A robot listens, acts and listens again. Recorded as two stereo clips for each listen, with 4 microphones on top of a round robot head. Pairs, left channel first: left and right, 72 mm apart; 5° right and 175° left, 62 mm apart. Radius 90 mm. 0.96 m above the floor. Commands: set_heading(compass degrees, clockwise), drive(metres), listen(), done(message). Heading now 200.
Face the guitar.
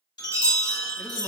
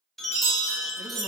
listen()
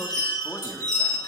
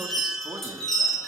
listen()
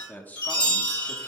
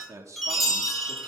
done("I can't make out a guitar, only a chime and a man speaking.")